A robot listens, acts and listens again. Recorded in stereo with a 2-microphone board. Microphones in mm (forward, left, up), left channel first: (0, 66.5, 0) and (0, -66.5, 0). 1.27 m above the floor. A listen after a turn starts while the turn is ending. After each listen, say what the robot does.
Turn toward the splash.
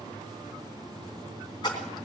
Turn 35° left.
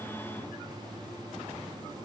Keep listening.
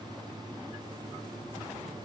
I heard a splash, but can't make it out now. It was about straight ahead or 110° left.